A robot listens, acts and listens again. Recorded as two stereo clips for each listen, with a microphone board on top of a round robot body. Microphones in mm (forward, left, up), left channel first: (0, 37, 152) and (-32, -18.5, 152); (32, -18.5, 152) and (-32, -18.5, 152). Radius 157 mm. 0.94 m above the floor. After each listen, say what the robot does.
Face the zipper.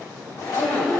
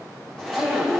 Turn 85° left.
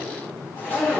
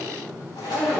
Facing the zipper, over 4 m away.